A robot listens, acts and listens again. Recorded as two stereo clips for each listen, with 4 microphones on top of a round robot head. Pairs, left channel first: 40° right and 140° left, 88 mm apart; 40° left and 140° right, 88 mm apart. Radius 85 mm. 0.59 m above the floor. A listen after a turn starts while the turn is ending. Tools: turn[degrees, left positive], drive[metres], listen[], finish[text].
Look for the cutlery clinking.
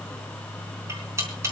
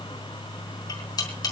Thought: The cutlery clinking: 80° left.
Action: turn[80]
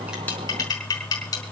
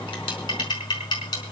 Action: finish[Facing the cutlery clinking, over 4 m away.]